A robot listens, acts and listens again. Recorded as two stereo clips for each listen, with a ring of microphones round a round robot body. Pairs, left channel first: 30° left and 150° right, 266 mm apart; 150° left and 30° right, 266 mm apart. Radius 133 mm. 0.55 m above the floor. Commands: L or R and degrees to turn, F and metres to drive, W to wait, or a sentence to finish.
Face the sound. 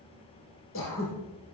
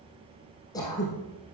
L75
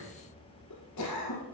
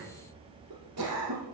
Facing the throat clearing.